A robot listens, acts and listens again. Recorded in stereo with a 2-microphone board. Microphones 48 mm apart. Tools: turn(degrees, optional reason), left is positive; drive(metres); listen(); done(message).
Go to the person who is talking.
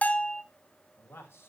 turn(degrees=55, reason="The man speaking: about 55° left or 125° left.")
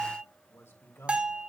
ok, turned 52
turn(degrees=70, reason="So it is at 70° left.")
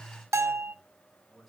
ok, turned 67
drive(metres=1.0)
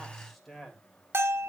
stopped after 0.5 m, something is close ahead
done("Blocked. The man speaking is further on, straight ahead.")